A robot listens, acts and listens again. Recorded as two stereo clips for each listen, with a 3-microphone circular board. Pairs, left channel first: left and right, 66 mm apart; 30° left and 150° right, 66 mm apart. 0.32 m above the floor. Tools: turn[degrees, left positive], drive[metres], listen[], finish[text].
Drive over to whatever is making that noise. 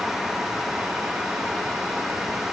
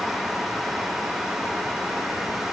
Action: listen[]
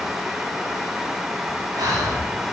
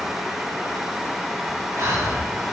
Thought: The breathing: 100° right.
Action: turn[-100]
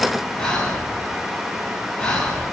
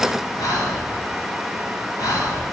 Thought: The breathing is now 15° left.
Action: turn[15]
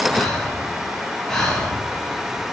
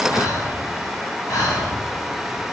Action: drive[1.0]
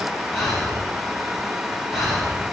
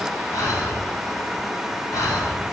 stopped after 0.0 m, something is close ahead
Action: finish[Blocked. The breathing is further on, straight ahead.]